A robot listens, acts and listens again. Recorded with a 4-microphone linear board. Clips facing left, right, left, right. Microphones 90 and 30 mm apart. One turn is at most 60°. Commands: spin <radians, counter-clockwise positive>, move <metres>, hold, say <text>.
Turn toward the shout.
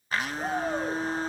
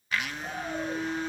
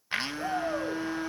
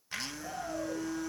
spin 1.05
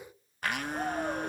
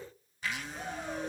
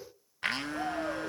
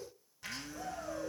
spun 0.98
spin 0.79
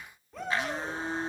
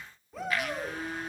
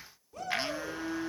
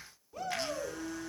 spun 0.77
say Facing the shout.